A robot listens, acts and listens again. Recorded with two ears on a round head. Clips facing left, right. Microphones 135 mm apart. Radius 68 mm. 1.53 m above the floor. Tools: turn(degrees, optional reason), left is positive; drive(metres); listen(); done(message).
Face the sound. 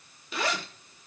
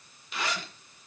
turn(degrees=90)
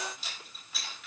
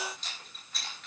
done("Facing the zipper, over 4 m away.")